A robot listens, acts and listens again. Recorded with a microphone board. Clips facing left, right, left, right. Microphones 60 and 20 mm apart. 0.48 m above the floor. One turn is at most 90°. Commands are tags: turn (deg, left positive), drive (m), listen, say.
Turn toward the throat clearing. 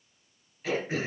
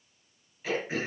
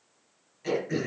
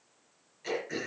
<turn deg="-30"/>
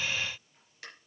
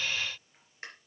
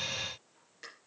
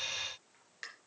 <turn deg="-90"/>
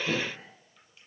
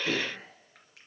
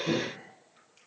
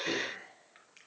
<turn deg="-75"/>
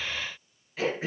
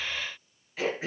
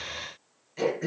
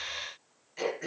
<say>Found it: throat clearing, straight ahead, over 4 m away.</say>